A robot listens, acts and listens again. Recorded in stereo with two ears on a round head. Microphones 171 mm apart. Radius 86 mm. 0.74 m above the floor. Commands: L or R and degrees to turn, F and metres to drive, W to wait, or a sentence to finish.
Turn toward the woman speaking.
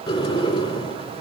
W
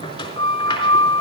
W
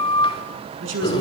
R70
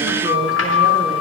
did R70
W
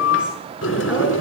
W
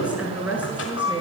R10
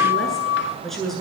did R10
Found it: a woman speaking, straight ahead.